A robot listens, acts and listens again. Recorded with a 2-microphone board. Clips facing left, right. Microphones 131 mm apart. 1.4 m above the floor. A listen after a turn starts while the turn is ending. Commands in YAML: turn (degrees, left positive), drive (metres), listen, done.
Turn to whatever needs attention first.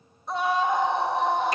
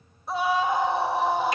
turn: -30
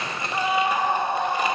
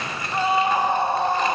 turn: -145
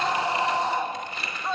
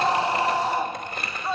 done: "Facing the scream, 1 to 2 m away."